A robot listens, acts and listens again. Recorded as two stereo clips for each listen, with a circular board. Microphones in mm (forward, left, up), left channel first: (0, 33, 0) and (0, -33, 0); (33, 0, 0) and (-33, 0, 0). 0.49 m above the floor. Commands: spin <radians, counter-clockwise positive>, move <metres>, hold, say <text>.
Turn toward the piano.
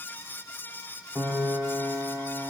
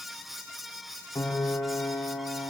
spin -0.79
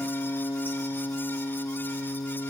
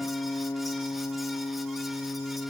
spin 0.26
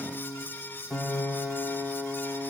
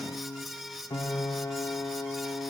say Facing the piano.